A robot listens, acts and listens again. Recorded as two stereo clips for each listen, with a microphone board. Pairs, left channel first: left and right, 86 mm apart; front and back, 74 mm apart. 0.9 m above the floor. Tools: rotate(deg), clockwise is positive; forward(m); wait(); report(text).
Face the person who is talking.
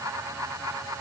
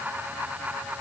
wait()
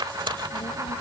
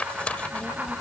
rotate(-90)
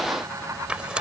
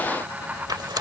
wait()
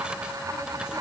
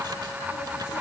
wait()
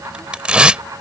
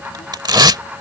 report("Facing where the child speaking came from. I can't hear it now.")